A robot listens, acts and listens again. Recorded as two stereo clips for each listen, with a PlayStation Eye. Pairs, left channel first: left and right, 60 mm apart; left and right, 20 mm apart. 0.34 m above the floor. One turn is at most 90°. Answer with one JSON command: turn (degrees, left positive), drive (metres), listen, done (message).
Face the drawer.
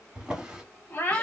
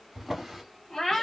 {"turn": -30}
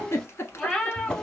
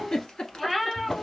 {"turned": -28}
{"turn": 15}
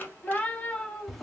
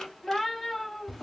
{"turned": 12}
{"done": "Facing the drawer."}